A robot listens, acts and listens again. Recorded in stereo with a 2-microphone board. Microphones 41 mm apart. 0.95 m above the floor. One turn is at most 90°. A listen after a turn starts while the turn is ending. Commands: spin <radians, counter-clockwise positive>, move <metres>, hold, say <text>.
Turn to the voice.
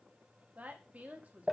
spin -0.70
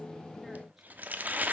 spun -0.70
hold
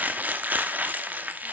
hold
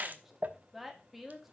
say Facing the woman speaking.